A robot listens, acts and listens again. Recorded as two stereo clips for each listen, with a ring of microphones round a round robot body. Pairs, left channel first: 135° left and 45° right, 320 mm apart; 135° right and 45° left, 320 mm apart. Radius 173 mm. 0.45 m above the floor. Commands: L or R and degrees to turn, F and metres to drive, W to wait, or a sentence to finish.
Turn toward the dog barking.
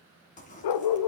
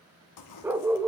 L130
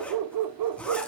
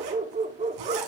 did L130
R25
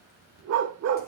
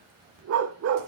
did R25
Facing the dog barking, under 1 m away.